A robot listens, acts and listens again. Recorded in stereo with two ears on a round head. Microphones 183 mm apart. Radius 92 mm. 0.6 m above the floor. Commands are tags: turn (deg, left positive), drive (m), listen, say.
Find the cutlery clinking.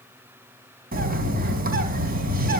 <listen/>
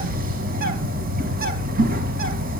<listen/>
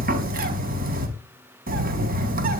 <say>I can't make out cutlery clinking, only a bird.</say>